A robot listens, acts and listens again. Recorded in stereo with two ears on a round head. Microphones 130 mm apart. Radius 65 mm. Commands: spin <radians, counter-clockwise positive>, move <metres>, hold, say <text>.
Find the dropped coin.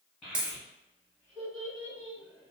spin -0.52
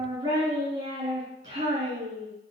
hold
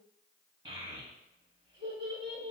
say I heard a dropped coin, but can't make it out now. It was about 25° left or 145° right.